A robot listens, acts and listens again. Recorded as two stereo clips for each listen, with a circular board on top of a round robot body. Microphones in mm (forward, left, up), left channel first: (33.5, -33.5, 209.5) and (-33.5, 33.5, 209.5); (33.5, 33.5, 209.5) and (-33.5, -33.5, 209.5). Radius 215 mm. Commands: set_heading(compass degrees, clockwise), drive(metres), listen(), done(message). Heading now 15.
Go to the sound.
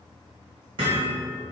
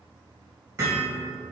set_heading(210)
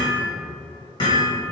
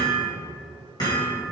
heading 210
drive(1.0)
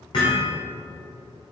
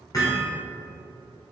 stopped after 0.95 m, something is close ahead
set_heading(220)
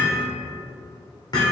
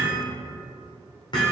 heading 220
done("I am next to the hammering.")